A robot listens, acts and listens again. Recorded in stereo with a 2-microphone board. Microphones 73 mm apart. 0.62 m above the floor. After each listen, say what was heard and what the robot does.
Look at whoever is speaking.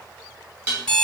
Keep listening.
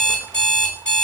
Keep listening.
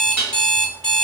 I can't make out anyone speaking, only an alarm clock and dishes clattering.